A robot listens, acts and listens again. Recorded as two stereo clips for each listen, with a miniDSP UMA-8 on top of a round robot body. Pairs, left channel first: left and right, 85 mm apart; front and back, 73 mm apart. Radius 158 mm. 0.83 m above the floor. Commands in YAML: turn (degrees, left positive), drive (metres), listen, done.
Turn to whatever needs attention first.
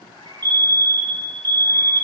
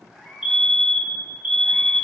turn: -100
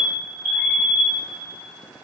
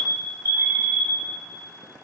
done: "Facing the fire alarm, 2 to 4 m away."